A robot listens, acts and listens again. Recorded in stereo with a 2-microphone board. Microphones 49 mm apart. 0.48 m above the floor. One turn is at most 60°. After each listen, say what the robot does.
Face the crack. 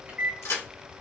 Turn 60° left.
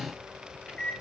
Turn 30° left.
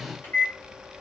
Facing where the crack came from. I can't hear it now.